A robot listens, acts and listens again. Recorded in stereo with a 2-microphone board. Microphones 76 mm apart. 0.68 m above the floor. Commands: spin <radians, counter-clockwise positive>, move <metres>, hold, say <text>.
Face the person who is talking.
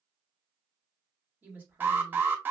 spin -0.44
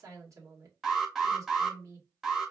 spin -2.18
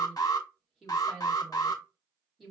say Found it: a woman speaking, straight ahead.